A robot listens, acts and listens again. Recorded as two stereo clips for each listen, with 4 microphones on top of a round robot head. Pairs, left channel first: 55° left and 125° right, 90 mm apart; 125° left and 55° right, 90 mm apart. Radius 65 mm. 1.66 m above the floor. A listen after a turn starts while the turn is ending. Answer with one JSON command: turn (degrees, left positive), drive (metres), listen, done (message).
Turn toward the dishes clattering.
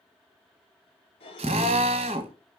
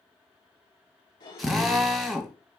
{"turn": 85}
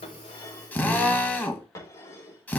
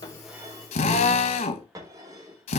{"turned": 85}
{"done": "Facing the dishes clattering."}